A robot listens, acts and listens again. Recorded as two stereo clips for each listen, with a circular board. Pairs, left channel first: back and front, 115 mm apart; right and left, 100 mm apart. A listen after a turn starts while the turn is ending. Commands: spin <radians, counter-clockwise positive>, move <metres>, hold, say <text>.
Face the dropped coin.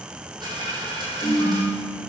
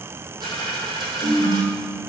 spin 0.87
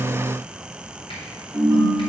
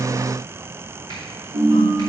say Facing where the dropped coin came from. I can't hear it now.